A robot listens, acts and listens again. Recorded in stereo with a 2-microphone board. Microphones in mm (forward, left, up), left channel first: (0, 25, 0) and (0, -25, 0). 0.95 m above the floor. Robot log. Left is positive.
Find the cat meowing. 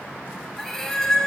cmd yaw +30
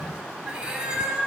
note: So it is at 20° right.
cmd yaw -20
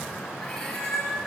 note: The cat meowing is now 10° left.
cmd yaw +10
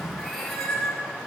end: Facing the cat meowing, over 4 m away.